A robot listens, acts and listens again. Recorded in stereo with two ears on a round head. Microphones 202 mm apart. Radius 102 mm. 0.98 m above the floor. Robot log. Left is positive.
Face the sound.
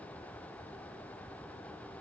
cmd idle
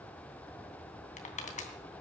note: The crushing: about 35° left or 145° left.
cmd yaw +35
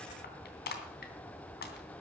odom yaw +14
note: So it is at 135° left.
cmd yaw +135
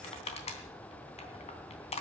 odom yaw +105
note: The crushing is now 30° left.
cmd yaw +30
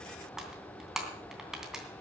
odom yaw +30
end: Found it: crushing, straight ahead.